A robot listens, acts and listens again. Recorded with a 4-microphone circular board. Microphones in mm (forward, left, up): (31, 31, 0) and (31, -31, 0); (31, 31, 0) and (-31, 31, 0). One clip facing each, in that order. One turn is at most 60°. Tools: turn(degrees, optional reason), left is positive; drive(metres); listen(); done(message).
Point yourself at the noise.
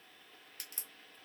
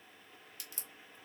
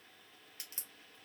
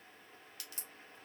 turn(degrees=55, reason="The crack: 55° left.")
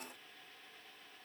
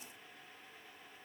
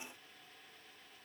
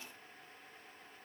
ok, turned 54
done("I heard a crack from this way, but can't make it out now.")